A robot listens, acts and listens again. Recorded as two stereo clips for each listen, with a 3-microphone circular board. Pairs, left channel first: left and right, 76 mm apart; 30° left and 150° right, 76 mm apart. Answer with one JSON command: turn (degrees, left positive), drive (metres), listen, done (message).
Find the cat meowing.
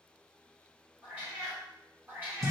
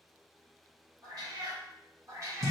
{"turn": -145}
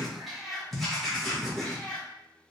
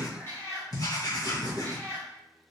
{"turn": 50}
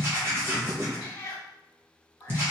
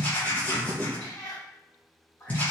{"turn": 55}
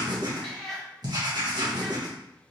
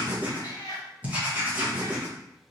{"turn": 10}
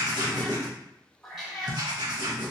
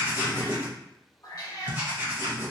{"done": "Found it: a cat meowing, straight ahead."}